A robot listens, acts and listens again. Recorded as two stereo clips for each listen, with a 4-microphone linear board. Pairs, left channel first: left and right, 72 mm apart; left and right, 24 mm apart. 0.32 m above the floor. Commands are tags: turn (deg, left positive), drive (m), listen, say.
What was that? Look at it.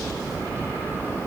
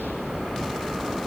<listen/>
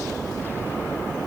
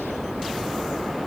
<listen/>
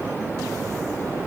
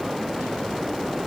<say>I can't make out anything to turn to.</say>